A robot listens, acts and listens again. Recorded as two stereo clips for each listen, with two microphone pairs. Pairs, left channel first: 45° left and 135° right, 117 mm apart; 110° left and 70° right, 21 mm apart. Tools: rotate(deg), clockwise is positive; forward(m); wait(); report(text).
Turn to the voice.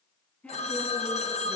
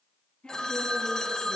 rotate(-120)
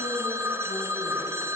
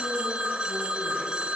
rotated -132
rotate(10)
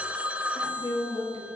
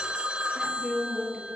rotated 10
report("Found it: a woman speaking, straight ahead.")